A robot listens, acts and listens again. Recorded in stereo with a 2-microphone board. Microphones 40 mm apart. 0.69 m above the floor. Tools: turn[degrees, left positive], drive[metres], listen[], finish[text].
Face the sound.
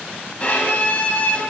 Thought: The violin: about 35° left or 145° left.
Action: turn[35]
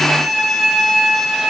Action: finish[Facing the violin.]